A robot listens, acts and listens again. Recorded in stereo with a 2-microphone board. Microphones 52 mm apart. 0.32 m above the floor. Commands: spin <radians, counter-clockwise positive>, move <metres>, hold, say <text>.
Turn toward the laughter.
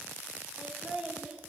spin -0.26
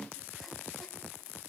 hold
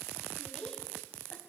spin 0.26
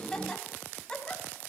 spin 0.35
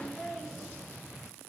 say Facing the laughter.